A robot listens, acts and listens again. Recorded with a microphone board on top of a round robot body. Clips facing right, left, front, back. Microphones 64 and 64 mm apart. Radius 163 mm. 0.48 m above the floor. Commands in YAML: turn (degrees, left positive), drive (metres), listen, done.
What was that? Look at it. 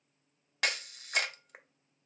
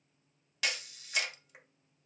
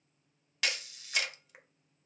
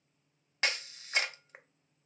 turn: -125
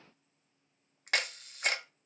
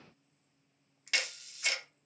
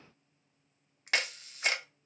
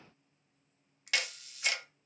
turn: -50
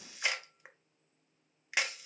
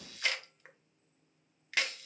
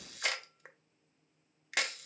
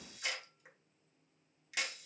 turn: -20
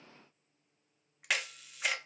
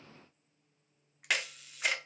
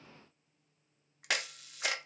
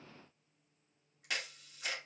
done: "Facing the camera shutter."